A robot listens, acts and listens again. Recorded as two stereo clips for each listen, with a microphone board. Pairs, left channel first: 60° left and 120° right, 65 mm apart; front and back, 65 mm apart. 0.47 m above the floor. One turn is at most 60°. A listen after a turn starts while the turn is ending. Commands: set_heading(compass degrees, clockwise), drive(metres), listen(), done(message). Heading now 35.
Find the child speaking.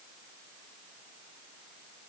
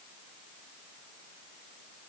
listen()
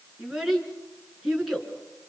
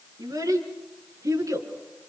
set_heading(335)
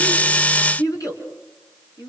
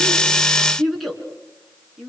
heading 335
set_heading(275)
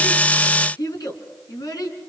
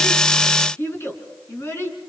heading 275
set_heading(225)
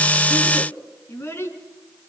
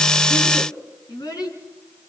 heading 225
set_heading(215)
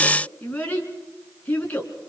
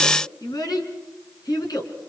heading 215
done("Facing the child speaking.")